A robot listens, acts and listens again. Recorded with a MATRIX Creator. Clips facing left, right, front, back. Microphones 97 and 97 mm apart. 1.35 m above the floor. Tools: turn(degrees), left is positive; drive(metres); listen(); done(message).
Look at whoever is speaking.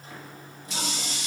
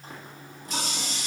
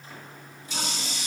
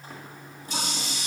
listen()
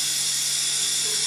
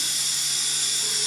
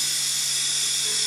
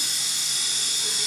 listen()
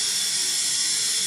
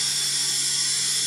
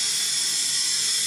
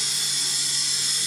done("I can't make out anyone speaking to turn to.")